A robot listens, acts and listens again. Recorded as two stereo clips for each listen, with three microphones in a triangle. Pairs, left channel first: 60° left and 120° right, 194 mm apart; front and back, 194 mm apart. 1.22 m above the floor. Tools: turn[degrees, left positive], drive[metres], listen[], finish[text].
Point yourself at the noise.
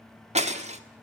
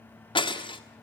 Thought: The breaking glass: 65° right.
Action: turn[-65]
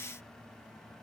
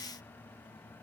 Action: finish[I heard breaking glass from this way, but can't make it out now.]